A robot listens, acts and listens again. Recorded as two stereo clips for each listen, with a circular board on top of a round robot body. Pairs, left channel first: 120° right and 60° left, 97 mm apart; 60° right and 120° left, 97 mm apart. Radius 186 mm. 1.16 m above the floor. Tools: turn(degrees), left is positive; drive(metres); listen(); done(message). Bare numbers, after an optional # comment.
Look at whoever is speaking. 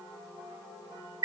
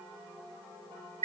listen()
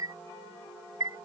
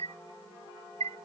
listen()
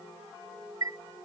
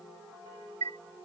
done("I can't make out anyone speaking, only a chime.")